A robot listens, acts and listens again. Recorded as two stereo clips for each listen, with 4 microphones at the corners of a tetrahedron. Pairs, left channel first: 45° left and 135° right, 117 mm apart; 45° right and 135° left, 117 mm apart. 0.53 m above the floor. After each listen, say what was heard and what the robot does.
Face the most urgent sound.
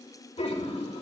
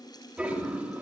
Keep listening.
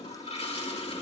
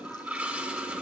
Keep listening.
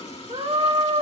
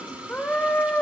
The scream: 120° right. Turn 120° right.
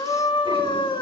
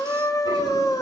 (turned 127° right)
The scream is now 10° left. Turn 10° left.
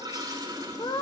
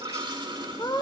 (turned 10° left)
Found it: a scream, straight ahead.